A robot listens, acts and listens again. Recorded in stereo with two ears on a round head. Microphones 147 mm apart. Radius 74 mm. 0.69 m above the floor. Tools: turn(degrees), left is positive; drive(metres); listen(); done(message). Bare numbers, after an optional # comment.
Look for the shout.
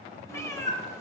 listen()
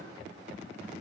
listen()
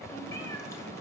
done("I can't make out a shout to turn to.")